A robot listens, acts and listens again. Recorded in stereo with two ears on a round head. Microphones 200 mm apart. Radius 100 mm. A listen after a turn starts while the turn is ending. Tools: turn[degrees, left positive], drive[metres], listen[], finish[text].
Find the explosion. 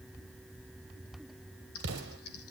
Thought: The explosion: about 50° right or 130° right.
Action: turn[-50]
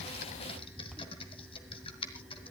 Action: listen[]
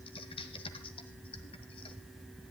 Action: finish[I heard an explosion, but can't make it out now. It was about straight ahead or 80° right.]